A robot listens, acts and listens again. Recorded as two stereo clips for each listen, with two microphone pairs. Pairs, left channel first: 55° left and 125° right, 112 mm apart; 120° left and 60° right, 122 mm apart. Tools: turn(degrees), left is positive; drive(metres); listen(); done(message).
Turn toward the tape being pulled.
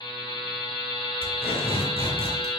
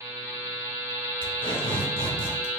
turn(degrees=80)
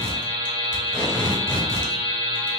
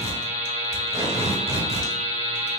done("Found it: tape being pulled, straight ahead, 1 to 2 m away.")